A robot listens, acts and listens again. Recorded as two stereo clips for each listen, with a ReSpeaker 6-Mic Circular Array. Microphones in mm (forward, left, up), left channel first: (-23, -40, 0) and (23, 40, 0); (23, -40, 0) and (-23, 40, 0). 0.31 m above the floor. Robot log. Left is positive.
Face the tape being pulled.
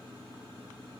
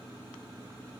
cmd idle
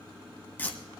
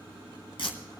note: The tape being pulled: 55° right.
cmd yaw -55
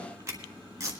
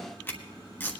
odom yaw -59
end: Found it: tape being pulled, straight ahead.